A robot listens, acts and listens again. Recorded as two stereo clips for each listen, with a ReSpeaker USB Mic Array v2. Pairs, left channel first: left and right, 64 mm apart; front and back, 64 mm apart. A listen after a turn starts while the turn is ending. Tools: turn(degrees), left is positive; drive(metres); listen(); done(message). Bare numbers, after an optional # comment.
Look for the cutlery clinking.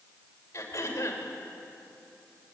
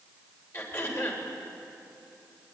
listen()
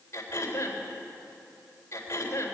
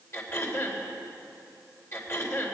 listen()
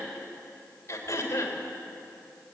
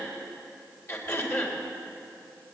done("I can't make out cutlery clinking to turn to.")